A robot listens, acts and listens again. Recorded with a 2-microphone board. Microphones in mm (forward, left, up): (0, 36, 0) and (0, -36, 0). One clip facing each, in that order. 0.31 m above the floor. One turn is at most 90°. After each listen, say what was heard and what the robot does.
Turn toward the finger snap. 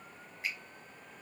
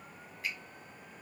The finger snap: about 25° left or 155° left. Turn 25° left.
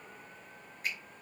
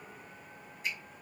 So it is at 125° left. Turn 90° left.
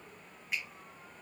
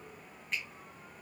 The finger snap is now 10° left. Turn 10° left.
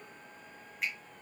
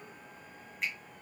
Found it: a finger snap, straight ahead.